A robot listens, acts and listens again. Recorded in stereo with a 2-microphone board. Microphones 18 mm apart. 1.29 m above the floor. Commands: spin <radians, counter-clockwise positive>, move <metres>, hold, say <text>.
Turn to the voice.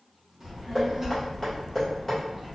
spin -0.44
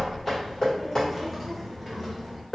say Found it: a child speaking, straight ahead, 1 to 2 m away.